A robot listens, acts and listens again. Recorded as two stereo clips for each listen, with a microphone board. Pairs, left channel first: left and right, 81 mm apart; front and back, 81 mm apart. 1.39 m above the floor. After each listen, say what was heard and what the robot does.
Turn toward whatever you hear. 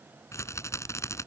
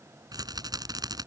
The rattle: 140° left. Turn 140° left.
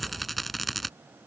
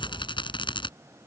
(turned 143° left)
Facing the rattle.